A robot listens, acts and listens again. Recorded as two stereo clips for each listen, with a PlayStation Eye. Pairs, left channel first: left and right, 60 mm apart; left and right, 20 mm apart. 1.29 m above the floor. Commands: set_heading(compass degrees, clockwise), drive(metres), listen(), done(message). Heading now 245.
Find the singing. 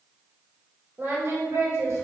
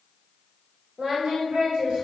set_heading(295)
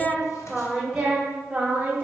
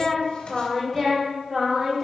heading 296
set_heading(331)
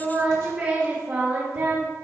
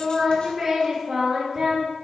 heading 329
set_heading(359)
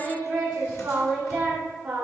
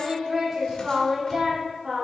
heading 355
set_heading(10)
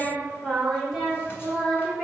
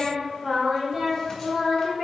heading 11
done("Found it: singing, straight ahead, 2 to 4 m away.")